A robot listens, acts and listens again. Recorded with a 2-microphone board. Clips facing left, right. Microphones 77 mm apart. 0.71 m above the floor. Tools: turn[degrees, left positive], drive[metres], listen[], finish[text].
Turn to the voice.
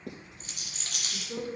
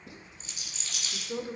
Thought: The woman speaking: about 20° right or 160° right.
Action: turn[-20]
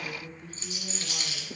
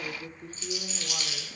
Thought: So it is at 140° right.
Action: turn[-140]
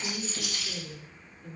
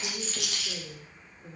Thought: The woman speaking is now 15° right.
Action: turn[-15]
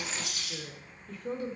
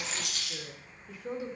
Action: finish[Facing the woman speaking, 1 to 2 m away.]